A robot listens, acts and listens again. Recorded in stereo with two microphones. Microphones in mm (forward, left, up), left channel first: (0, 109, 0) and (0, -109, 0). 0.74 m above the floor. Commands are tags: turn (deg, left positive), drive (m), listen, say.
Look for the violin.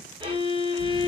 <turn deg="-20"/>
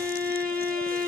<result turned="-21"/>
<turn deg="-135"/>
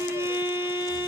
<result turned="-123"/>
<turn deg="-10"/>
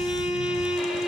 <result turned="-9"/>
<say>Facing the violin, under 1 m away.</say>